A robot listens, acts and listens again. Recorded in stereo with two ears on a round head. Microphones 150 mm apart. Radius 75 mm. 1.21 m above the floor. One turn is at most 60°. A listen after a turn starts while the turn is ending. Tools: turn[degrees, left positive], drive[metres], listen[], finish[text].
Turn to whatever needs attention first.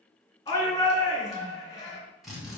Thought: The shout: about 20° left or 160° left.
Action: turn[20]
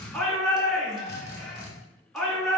Action: finish[Found it: a shout, straight ahead.]